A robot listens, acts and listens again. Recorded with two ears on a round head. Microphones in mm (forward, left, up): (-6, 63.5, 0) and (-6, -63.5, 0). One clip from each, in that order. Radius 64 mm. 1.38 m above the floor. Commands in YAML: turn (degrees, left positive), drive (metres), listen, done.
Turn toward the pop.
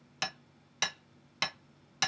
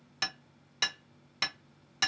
listen: true
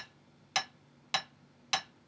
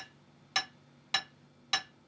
listen: true
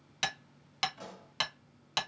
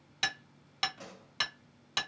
turn: 30
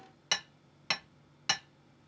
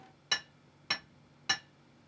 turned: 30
listen: true
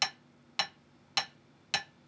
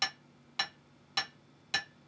done: "I heard a pop, but can't make it out now. It was about 25° right or 145° left."